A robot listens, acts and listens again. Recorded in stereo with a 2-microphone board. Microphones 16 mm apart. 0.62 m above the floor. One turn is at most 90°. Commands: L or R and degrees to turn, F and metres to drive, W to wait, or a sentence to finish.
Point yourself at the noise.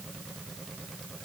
W
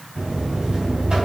R55
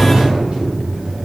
R70
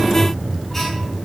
L20
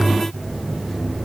Found it: a buzzer, straight ahead.